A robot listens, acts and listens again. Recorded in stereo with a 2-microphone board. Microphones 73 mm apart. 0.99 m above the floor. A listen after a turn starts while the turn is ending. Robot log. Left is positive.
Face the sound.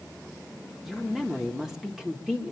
cmd yaw -30
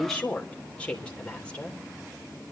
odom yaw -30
note: So it is at 15° left.
cmd yaw +15
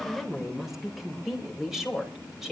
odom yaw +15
end: Facing the woman speaking.